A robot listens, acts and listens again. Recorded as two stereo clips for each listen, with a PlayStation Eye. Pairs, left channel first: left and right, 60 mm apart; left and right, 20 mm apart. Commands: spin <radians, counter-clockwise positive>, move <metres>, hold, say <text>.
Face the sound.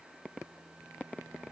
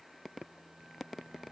hold
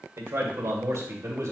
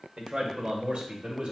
spin -1.22
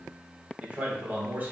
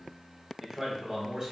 spin -0.61
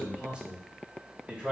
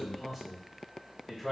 spin -0.35
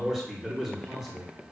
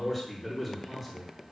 say Facing the man speaking, over 4 m away.